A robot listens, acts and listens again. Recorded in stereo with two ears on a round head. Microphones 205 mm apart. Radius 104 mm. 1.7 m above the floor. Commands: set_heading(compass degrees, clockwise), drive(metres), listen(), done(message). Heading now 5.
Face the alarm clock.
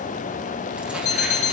set_heading(335)
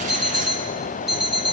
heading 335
done("Found it: an alarm clock, straight ahead, 2 to 4 m away.")